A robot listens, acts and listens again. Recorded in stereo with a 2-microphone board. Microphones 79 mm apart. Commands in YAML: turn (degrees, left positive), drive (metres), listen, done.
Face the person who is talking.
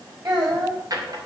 turn: -50
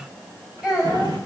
done: "Facing the child speaking."